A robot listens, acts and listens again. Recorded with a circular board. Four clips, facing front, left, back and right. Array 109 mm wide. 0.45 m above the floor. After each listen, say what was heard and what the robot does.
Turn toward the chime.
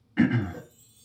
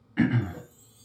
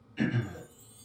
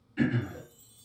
The chime: 155° left. Turn 155° left.
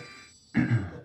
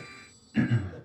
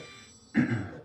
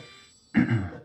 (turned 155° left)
The chime is now 35° left. Turn 35° left.
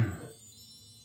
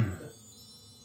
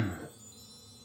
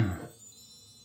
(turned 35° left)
The chime is now 15° left. Turn 15° left.
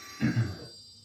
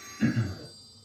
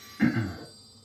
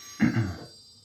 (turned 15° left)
Facing the chime, 1 to 2 m away.